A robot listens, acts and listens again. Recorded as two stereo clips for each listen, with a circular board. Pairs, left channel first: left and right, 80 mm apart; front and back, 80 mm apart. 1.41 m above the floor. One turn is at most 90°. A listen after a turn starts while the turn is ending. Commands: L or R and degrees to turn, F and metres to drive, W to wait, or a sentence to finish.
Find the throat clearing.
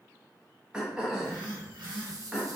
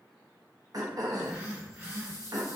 R90
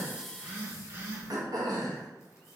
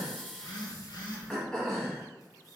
R80
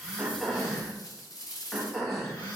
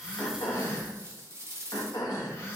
Found it: throat clearing, straight ahead.